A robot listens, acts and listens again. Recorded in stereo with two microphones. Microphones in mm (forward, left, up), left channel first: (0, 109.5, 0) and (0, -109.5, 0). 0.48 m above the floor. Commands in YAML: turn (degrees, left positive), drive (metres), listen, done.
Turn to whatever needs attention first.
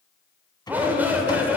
turn: -30
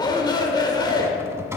turn: 20
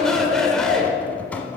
done: "Found it: a shout, straight ahead, 1 to 2 m away."